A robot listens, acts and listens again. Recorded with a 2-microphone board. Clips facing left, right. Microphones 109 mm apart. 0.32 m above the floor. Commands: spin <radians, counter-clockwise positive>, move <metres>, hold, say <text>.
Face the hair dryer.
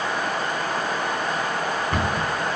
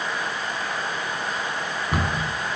hold
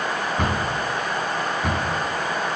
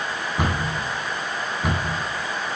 hold
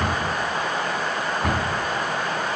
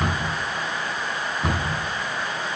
say I can't make out a hair dryer, only a cupboard door.